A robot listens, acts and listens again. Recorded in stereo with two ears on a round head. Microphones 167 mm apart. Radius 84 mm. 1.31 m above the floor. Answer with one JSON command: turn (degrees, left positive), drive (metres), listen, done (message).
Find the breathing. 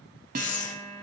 {"turn": 40}
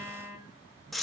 {"done": "Found it: breathing, straight ahead."}